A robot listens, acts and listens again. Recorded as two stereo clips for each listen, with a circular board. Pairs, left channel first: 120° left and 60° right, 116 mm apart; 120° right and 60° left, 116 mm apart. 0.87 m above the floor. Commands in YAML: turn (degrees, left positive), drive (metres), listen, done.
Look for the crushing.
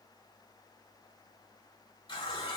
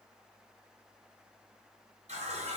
listen: true
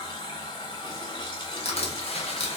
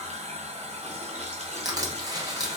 turn: 115
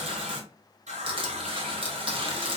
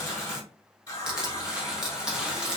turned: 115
turn: -25
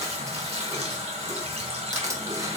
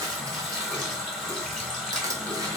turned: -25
done: "Found it: crushing, straight ahead."